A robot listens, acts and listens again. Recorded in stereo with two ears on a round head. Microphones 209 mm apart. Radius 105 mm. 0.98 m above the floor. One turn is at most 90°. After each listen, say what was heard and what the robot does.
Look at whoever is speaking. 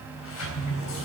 Keep listening.
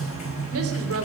The woman speaking: about 70° right or 110° right. Turn 70° right.
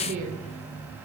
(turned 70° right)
So it is at 40° right. Turn 40° right.
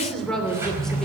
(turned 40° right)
Facing the woman speaking, 2 to 4 m away.